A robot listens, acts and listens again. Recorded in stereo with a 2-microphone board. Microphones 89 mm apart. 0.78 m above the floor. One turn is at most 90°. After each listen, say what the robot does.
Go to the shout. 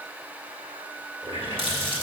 Keep listening.
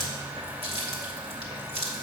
Keep listening.
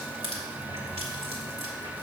I can't make out a shout, only a running tap.